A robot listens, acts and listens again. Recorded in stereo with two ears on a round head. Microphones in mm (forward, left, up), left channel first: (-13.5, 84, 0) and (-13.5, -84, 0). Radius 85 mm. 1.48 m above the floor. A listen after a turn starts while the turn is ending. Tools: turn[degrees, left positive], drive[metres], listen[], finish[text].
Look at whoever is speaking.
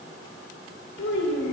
Thought: The child speaking: about 70° left or 110° left.
Action: turn[70]
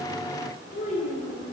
Thought: So it is at 45° left.
Action: turn[45]
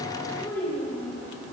Thought: The child speaking is now 15° left.
Action: turn[15]
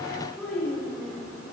Action: finish[Facing the child speaking.]